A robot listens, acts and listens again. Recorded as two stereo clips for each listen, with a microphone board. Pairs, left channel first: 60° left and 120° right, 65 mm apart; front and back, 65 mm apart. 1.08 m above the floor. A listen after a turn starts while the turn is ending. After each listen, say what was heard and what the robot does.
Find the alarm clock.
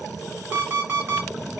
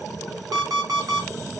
The alarm clock: 175° right. Turn 175° right.
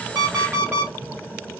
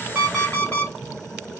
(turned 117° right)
The alarm clock is now 60° right. Turn 60° right.
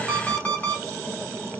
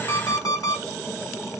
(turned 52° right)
Found it: an alarm clock, straight ahead.